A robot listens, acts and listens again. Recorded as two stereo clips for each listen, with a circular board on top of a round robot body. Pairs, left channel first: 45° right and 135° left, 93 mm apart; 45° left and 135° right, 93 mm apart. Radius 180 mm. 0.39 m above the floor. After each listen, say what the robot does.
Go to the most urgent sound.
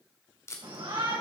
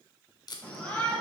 Turn 120° left.
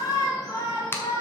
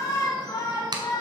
Drive 1.0 m forward.
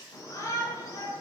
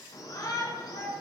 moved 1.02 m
Drive 1.0 m forward.
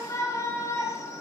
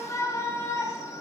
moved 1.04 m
Drive 1.0 m forward.
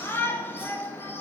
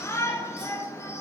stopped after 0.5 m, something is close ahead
I am next to the shout.